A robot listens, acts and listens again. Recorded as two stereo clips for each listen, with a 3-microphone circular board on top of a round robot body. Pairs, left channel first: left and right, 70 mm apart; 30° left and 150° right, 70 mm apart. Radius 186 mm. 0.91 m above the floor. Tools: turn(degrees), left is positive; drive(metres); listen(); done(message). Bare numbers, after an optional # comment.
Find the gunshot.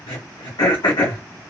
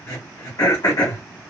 listen()
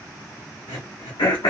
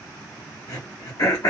listen()
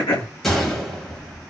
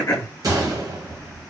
# The gunshot: 175° left.
turn(175)
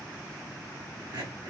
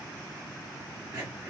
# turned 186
# Nothing new. It was at 10° right.
turn(-10)
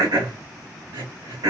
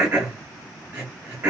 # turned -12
done("I heard a gunshot from this way, but can't make it out now.")